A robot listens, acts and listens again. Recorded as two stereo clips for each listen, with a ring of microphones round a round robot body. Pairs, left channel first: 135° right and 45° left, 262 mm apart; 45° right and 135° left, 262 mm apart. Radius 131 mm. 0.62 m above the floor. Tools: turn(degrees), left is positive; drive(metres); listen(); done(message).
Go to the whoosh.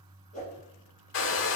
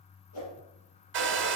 turn(degrees=-70)
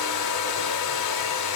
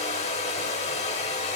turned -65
listen()
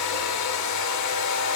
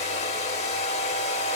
listen()
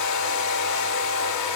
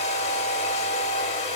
done("Facing where the whoosh came from. I can't hear it now. I did not reach it.")